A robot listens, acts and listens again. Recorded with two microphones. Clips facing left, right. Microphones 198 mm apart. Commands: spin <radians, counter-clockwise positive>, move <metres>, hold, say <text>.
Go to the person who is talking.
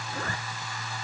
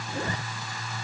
hold
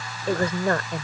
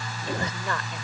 spin 0.87
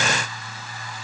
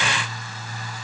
hold
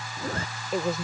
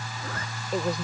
move 1.0
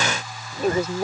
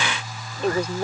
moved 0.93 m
move 1.0
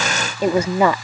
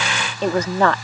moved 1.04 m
spin 0.17
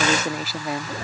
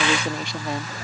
move 1.0
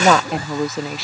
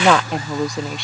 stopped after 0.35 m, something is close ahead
say I am next to the woman speaking.